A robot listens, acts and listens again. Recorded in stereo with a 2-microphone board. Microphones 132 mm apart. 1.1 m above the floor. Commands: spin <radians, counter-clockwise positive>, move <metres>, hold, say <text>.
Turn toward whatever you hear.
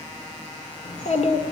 spin 1.05
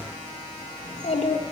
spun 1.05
spin 1.05
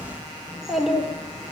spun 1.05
say Found it: a child speaking, straight ahead, 1 to 2 m away.